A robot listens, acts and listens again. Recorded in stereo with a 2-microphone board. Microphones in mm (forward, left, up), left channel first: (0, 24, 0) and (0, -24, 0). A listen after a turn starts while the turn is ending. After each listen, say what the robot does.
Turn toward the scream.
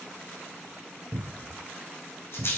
Keep listening.
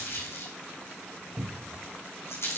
Keep listening.
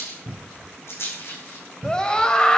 Turn 20° left.
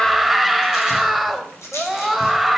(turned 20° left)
Found it: a scream, straight ahead.